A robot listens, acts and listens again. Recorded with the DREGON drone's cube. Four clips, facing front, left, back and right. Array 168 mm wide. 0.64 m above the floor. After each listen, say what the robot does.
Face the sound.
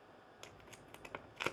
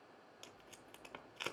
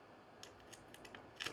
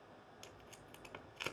Found it: tape being pulled, straight ahead, under 1 m away.